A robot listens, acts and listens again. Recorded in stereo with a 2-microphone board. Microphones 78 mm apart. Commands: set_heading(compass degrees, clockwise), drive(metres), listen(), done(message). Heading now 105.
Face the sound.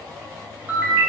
set_heading(125)
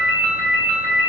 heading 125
set_heading(260)
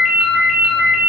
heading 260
done("Found it: a ringtone, straight ahead, under 1 m away.")